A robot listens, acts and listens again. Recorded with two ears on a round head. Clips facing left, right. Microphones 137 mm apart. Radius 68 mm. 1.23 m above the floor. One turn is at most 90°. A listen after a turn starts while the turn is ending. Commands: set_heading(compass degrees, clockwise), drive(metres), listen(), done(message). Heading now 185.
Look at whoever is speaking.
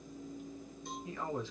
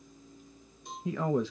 set_heading(245)
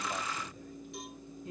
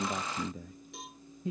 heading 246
set_heading(306)
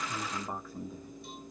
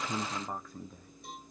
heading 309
done("Facing the man speaking.")